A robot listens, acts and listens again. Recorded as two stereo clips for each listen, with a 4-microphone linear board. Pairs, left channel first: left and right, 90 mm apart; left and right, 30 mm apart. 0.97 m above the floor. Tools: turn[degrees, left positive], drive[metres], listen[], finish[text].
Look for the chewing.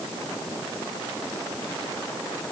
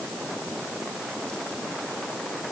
Action: listen[]
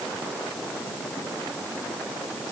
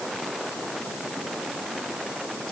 Action: listen[]
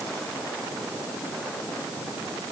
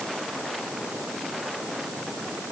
Action: finish[I can't make out chewing to turn to.]